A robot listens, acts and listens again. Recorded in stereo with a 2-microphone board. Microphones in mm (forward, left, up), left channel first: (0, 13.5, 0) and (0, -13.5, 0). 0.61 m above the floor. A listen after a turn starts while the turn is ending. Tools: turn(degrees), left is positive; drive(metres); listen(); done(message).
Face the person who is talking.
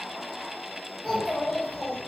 turn(degrees=30)
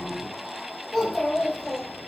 turn(degrees=25)
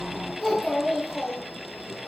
turn(degrees=25)
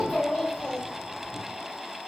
turn(degrees=15)
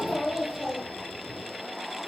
done("Found it: a child speaking, straight ahead.")